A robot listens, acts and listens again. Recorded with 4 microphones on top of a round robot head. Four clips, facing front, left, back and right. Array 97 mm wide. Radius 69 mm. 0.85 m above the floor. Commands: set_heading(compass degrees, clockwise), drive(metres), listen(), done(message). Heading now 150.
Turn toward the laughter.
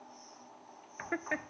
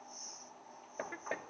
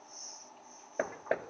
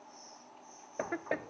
set_heading(185)
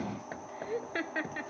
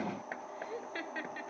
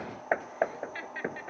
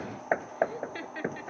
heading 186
done("Found it: laughter, straight ahead.")